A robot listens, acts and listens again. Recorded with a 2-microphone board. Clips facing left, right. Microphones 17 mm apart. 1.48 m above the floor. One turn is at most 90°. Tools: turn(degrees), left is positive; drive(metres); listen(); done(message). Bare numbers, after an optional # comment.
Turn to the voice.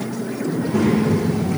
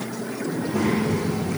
# The child speaking: about 50° left or 130° left.
turn(50)
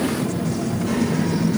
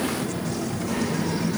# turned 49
# So it is at 80° left.
turn(80)
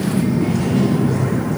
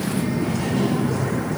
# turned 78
done("Found it: a child speaking, straight ahead, 1 to 2 m away.")